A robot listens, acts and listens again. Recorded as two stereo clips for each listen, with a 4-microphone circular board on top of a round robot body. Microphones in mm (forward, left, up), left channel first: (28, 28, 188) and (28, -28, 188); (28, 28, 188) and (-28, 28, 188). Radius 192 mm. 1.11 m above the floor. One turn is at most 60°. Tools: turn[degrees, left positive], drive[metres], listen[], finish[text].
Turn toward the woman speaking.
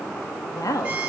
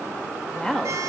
Thought: The woman speaking: 80° left.
Action: turn[60]
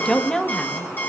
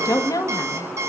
Thought: The woman speaking is now 10° left.
Action: turn[10]
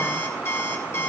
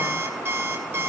Action: listen[]
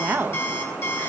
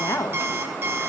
Thought: The woman speaking is now 40° right.
Action: turn[-40]
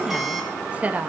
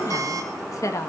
Thought: The woman speaking is now 30° right.
Action: turn[-30]
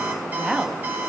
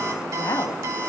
Action: finish[Facing the woman speaking.]